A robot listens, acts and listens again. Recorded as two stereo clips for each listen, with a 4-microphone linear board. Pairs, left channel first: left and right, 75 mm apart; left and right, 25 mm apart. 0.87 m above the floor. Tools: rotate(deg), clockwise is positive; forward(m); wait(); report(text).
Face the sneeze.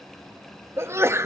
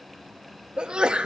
rotate(35)
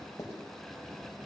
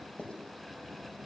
wait()
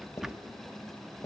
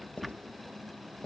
report("I heard a sneeze, but can't make it out now. It was about straight ahead or 110° right.")